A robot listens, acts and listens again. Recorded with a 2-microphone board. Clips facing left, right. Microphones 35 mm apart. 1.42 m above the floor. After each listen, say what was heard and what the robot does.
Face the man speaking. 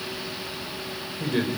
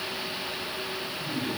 Turn 90° left.
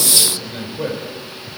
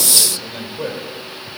Facing the man speaking.